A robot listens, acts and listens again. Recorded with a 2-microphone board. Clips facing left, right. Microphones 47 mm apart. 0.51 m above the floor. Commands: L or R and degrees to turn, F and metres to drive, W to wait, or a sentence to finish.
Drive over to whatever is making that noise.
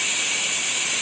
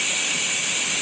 W
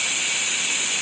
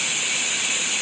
W
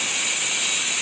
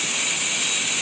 I can't make out anything.